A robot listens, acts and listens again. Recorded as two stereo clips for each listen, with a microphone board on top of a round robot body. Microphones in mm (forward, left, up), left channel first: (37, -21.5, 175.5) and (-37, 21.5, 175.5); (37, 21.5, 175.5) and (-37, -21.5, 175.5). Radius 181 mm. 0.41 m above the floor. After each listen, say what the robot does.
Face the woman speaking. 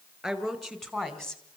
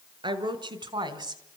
Turn 115° right.
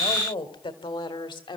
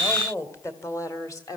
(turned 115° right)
Turn 15° right.
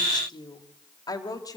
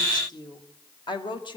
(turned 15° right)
Turn 10° left.
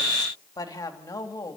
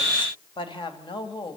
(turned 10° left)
Turn 15° left.
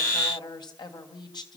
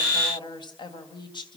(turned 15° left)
Facing the woman speaking.